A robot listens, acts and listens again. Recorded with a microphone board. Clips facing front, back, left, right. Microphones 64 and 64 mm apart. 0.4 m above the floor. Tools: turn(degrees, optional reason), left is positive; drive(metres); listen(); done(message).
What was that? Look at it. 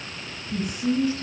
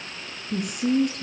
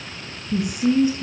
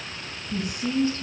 turn(degrees=160, reason="The woman speaking: 160° left.")
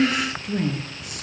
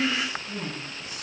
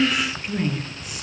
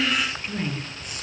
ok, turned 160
done("Found it: a woman speaking, straight ahead, over 4 m away.")